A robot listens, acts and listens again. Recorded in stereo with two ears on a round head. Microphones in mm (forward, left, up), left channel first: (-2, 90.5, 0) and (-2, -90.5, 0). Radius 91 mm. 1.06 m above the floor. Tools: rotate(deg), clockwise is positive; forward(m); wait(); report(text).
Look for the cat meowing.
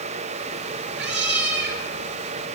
rotate(55)
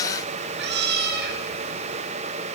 rotate(50)
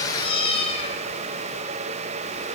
rotate(-30)
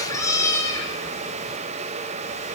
rotate(-15)
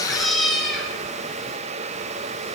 report("Found it: a cat meowing, straight ahead, 2 to 4 m away.")